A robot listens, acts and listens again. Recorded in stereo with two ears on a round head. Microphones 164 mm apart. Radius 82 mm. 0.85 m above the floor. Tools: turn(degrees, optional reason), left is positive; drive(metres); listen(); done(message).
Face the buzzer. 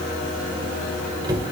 listen()
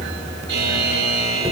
turn(degrees=-60, reason="The buzzer: about 60° right or 120° right.")
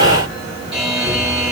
done("Facing the buzzer, over 4 m away.")